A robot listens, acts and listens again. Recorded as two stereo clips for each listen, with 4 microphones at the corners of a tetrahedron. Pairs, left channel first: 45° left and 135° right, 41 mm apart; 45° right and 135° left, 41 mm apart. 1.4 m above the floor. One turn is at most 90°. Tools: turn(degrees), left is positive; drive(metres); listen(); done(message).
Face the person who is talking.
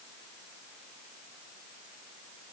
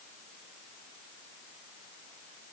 listen()
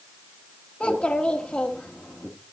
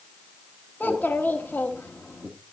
turn(degrees=-10)
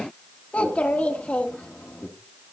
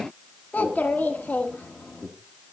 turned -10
done("Facing the child speaking.")